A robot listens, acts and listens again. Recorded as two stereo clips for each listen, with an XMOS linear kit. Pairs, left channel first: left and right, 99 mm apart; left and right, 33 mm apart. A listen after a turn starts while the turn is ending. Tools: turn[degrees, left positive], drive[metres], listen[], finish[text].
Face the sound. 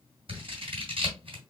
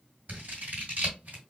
Thought: The scissors: about 60° right or 120° right.
Action: turn[-60]
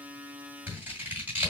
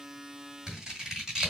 Thought: So it is at 15° right.
Action: turn[-15]
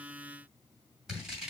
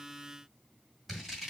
Action: finish[Facing the scissors, 2 to 4 m away.]